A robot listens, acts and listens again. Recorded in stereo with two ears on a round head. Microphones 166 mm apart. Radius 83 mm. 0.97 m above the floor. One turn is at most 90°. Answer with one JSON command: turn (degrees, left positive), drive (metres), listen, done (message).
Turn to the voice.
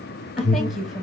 {"turn": 30}
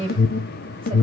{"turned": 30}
{"turn": -30}
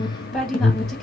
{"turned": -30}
{"done": "Facing the woman speaking."}